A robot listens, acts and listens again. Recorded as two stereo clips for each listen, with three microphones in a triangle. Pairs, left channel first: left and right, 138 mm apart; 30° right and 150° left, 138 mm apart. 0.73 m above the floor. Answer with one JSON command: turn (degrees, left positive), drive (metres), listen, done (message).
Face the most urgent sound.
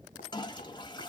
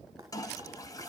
{"listen": true}
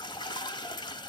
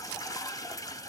{"listen": true}
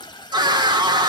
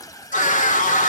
{"turn": -35}
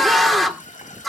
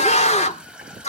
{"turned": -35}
{"done": "Found it: a scream, straight ahead."}